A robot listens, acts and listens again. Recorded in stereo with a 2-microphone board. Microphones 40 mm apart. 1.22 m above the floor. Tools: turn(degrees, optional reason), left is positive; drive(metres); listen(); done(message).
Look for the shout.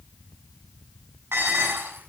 listen()
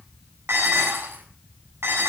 listen()
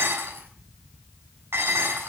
done("I can't make out a shout, only dishes clattering.")